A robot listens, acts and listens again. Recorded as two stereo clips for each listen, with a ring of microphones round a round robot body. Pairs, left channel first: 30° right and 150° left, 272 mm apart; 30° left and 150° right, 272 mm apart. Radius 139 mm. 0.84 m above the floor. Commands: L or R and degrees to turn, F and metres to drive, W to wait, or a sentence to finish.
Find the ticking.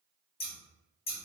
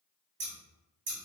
W
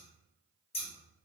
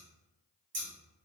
W
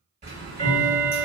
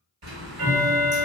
R145
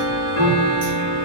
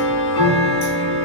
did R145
L10
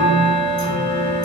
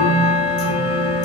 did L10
Facing the ticking, 1 to 2 m away.